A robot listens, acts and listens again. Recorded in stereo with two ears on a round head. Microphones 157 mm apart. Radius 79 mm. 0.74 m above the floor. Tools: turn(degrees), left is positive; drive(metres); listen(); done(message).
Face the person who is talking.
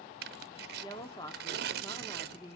turn(degrees=25)
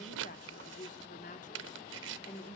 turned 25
turn(degrees=130)
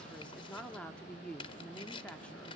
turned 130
done("Facing the woman speaking.")